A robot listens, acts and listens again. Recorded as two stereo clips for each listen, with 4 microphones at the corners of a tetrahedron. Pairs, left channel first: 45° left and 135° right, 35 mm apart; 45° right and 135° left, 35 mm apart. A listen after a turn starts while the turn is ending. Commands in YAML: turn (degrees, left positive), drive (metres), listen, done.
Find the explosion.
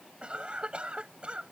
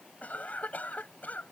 listen: true
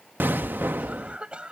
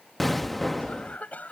turn: -130
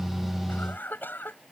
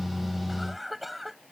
done: "I heard an explosion from this way, but can't make it out now."